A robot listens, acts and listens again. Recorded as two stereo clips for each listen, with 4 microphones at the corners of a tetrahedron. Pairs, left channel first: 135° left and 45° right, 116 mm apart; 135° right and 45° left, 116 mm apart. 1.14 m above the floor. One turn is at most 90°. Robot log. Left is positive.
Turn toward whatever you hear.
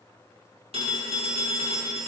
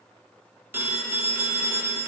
note: The phone ringing: 25° right.
cmd yaw -25
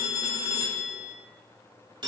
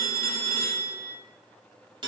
end: Found it: a phone ringing, straight ahead.